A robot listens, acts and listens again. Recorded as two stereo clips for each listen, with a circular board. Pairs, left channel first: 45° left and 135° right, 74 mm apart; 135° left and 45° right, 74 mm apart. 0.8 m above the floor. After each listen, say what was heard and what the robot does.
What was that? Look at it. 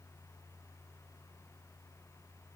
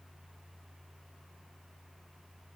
Keep listening.
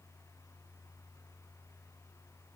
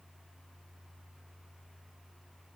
Keep listening.
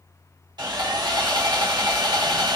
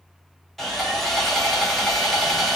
The sawing: 140° right. Turn 140° right.
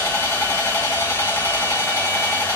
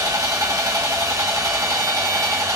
The sawing is now 10° right. Turn 10° right.
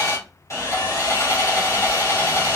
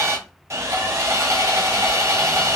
Found it: sawing, straight ahead, 1 to 2 m away.